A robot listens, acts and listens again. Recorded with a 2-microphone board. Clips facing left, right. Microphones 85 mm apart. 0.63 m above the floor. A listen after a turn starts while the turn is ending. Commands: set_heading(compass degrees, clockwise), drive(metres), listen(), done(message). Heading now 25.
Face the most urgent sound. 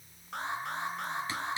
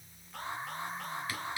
set_heading(295)
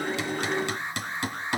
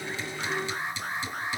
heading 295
done("Found it: an alarm, straight ahead.")